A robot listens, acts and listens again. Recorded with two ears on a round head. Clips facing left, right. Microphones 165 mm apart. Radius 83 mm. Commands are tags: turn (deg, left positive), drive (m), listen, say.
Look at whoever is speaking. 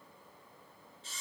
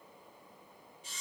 <listen/>
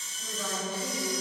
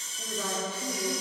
<turn deg="-35"/>
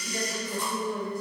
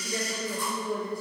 <turn deg="-125"/>
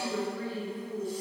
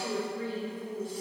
<turn deg="-25"/>
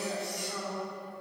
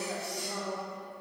<turn deg="-10"/>
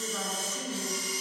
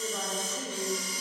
<say>Facing the woman speaking.</say>